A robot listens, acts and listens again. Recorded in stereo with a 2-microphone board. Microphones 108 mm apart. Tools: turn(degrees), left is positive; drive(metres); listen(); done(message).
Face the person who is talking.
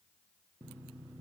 listen()
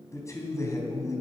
turn(degrees=30)
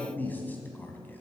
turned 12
turn(degrees=15)
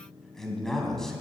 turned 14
done("Facing the man speaking.")